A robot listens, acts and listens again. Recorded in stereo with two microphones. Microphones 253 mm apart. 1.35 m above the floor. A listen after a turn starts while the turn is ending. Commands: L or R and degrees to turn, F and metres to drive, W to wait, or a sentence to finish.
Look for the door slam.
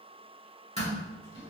L25
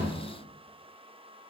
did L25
W
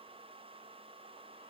I heard a door slam, but can't make it out now. It was about straight ahead or 130° left.